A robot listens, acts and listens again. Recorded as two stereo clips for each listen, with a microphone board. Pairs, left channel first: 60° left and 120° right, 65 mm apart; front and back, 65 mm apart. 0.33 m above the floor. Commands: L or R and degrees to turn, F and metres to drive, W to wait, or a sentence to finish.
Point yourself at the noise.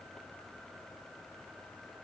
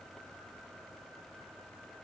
W
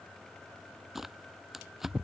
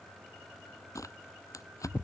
R35
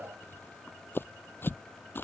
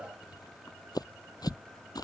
Found it: tearing paper, straight ahead.